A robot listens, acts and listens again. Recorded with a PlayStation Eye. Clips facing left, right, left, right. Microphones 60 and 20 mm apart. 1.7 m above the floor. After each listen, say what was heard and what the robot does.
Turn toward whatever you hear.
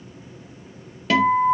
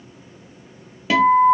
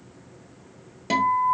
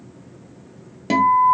Turn 30° right.
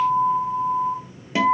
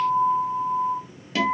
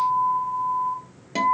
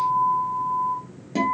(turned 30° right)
So it is at 20° left. Turn 20° left.
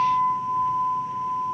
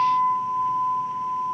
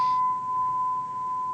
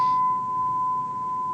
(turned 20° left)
Found it: a guitar, straight ahead.